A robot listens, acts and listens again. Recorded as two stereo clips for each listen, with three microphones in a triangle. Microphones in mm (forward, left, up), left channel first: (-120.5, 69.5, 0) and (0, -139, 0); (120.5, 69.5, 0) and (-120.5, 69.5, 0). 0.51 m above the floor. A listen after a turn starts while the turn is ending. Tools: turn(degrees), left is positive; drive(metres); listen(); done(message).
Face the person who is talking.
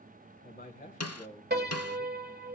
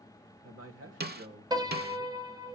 turn(degrees=180)
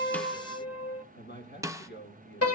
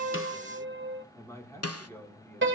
turn(degrees=80)
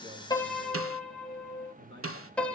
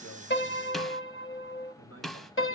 turn(degrees=-20)
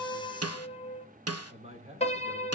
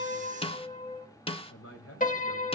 done("Facing the man speaking.")